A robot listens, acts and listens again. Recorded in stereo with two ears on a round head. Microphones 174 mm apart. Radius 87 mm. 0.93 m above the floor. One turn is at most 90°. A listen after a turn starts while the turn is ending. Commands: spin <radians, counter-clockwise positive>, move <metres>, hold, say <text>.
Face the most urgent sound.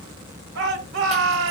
spin -1.13
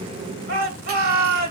spin -0.87
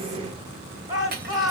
spin -0.35
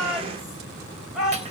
say Facing the shout.